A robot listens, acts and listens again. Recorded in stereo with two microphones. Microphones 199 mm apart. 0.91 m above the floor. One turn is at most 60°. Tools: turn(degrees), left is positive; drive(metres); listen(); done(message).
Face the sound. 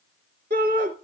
turn(degrees=-55)
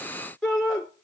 done("Found it: a shout, straight ahead.")